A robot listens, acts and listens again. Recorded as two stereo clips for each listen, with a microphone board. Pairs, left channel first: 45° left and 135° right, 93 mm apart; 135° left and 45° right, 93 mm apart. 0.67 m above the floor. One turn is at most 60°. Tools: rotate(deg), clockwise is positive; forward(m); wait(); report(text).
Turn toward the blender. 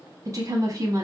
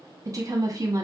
wait()
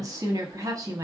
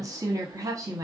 wait()
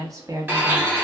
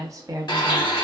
rotate(-60)
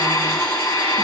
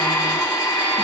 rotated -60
rotate(-60)
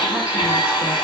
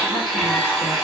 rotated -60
rotate(-35)
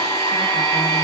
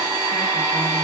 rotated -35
report("Found it: a blender, straight ahead.")